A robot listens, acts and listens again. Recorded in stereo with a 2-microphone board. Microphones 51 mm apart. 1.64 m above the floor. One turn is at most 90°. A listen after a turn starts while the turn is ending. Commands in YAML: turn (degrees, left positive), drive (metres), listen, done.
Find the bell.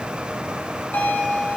turn: 40
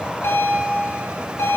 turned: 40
turn: 90
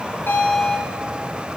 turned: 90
turn: 20
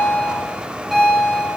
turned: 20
done: "Facing the bell."